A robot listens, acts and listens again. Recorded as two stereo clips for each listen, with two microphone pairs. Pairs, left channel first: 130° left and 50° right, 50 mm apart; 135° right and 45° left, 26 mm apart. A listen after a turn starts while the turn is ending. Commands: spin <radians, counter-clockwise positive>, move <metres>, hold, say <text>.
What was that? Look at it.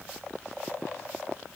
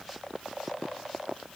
hold
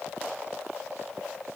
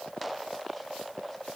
hold
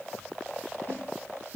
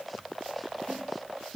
spin 3.14
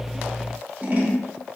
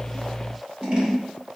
say Facing the scissors, 1 to 2 m away.